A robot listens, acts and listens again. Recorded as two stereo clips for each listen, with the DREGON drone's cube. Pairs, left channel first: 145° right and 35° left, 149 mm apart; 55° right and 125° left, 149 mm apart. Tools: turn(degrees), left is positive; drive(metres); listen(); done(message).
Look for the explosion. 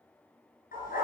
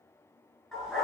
listen()
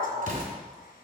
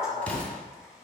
turn(degrees=25)
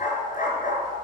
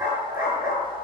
done("Facing where the explosion came from. I can't hear it now.")